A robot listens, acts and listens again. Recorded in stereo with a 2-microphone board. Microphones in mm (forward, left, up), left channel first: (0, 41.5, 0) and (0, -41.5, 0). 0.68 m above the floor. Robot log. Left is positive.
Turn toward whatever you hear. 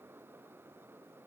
cmd idle
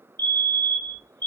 note: The fire alarm: about 65° right or 115° right.
cmd yaw -65
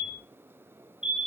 note: So it is at 10° right.
cmd yaw -10
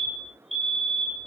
end: Found it: a fire alarm, straight ahead, 2 to 4 m away.